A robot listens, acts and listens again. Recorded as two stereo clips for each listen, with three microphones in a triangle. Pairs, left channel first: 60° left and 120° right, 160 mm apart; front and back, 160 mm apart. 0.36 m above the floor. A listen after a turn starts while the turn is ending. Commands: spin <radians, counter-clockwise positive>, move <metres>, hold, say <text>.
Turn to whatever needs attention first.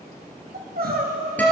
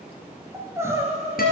spin -1.83
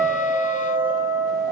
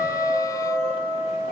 hold
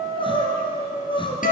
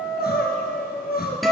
say Facing the crying, 1 to 2 m away.